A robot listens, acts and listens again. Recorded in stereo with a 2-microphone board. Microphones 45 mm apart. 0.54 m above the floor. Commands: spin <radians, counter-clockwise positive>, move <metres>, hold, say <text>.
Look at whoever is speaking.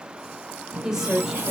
spin -0.52
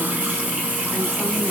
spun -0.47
hold
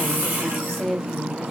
spin 0.17
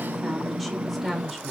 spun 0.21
say Found it: a woman speaking, straight ahead, 1 to 2 m away.